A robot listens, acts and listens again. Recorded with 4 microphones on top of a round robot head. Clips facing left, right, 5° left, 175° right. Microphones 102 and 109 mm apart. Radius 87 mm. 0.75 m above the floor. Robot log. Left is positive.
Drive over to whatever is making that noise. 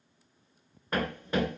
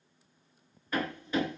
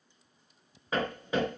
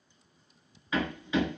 note: The hammering: 50° left.
cmd yaw +50
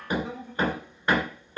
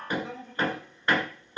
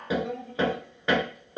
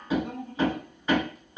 note: The hammering is now 10° left.
cmd yaw +10
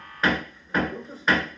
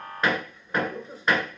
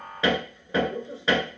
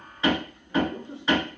cmd fwd 1.0
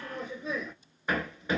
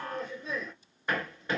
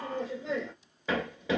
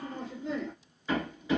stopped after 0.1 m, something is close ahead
end: Something is in my way. I am facing the hammering but have not reached it.